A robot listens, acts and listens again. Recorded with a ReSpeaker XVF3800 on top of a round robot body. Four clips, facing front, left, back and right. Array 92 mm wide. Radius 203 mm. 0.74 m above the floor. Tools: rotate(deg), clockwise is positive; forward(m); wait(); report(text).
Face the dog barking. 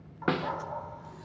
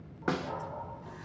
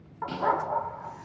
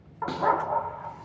rotate(120)
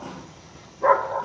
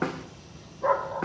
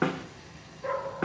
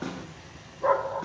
report("Found it: a dog barking, straight ahead, under 1 m away.")